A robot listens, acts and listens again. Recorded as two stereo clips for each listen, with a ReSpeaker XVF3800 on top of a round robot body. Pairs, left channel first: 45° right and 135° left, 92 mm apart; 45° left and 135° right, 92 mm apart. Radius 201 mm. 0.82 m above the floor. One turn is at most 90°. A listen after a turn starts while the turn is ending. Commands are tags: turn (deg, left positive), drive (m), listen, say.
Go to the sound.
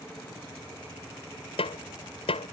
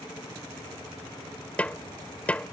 <turn deg="-30"/>
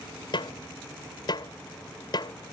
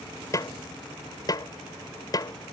<drive m="1.0"/>
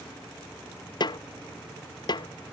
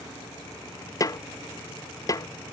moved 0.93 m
<drive m="1.0"/>
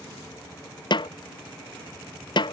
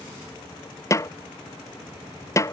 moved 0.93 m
<turn deg="-10"/>
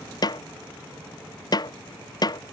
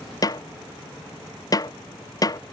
<drive m="1.0"/>
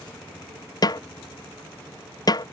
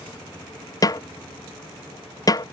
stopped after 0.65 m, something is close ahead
<say>I am next to the snare drum.</say>